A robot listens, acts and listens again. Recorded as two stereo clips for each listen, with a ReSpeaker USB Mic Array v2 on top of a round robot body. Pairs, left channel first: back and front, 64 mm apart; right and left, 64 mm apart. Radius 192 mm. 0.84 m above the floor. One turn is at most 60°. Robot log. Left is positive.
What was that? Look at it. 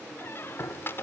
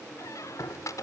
note: The squeak: 125° right.
cmd yaw -60
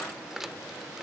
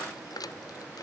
note: The squeak is now 85° right.
cmd yaw -60
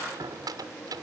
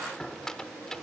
note: The squeak is now 10° right.
cmd yaw -10
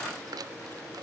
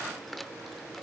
end: Facing the squeak.